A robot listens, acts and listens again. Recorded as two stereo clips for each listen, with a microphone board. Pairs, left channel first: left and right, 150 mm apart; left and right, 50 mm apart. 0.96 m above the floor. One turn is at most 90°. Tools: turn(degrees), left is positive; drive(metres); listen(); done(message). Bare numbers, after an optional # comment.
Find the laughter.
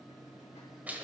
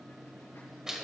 listen()
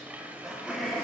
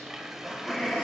turn(30)
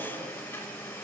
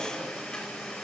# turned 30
listen()
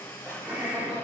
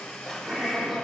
turn(-30)
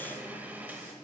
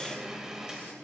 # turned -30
listen()
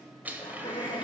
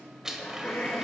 # So it is at 35° left.
turn(35)
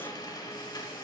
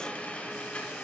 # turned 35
listen()
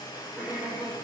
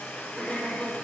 done("Found it: laughter, straight ahead, 2 to 4 m away.")